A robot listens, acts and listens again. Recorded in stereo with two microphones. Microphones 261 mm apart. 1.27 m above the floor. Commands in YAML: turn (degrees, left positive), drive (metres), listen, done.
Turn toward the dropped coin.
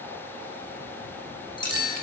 turn: 20
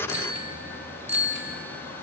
listen: true
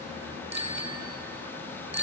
done: "I heard a dropped coin, but can't make it out now. It was about straight ahead or 140° left."